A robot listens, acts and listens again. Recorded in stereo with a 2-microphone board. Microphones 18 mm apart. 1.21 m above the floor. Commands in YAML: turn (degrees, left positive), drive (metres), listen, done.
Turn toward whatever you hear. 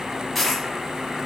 turn: 30
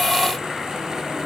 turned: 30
listen: true
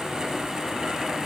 done: "I heard a dropped coin, but can't make it out now. It was about 25° right or 145° left."